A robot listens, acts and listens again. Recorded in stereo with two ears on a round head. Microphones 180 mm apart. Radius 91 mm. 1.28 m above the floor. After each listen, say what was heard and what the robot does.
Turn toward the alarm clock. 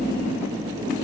Keep listening.
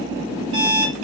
Turn 90° right.
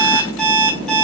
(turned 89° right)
Facing the alarm clock, 2 to 4 m away.